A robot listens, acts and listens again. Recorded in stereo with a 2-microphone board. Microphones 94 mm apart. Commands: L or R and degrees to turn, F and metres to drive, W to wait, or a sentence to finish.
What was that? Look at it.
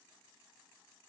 W
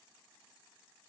W
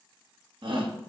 R60
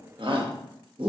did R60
R60
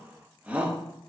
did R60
R15
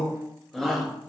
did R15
Facing the shout, 1 to 2 m away.